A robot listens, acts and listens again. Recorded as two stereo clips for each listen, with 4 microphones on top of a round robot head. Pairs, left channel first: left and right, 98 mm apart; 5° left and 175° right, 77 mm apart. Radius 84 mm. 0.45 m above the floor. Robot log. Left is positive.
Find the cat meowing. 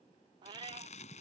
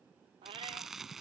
note: The cat meowing: 140° right.
cmd yaw -140
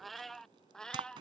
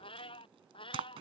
note: The cat meowing is now 10° left.
cmd yaw +10
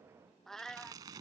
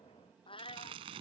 end: Facing the cat meowing.